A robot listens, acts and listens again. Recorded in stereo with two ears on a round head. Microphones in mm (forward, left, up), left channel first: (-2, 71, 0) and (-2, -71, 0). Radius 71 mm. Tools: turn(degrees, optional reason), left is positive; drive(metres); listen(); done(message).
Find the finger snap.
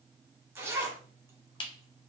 turn(degrees=30, reason="The finger snap: about 30° left or 150° left.")
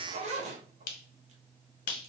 turn(degrees=120, reason="So it is at 120° left.")
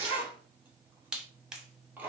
done("Found it: a finger snap, straight ahead, under 1 m away.")